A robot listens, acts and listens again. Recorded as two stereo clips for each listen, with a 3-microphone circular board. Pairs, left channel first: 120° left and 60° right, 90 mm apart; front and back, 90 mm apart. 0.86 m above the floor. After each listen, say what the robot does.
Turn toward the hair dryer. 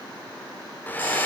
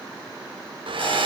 Turn 170° right.
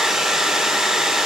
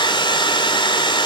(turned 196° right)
Turn 25° left.
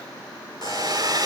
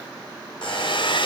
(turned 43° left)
Turn 20° right.
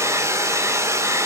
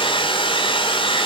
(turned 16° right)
Facing the hair dryer.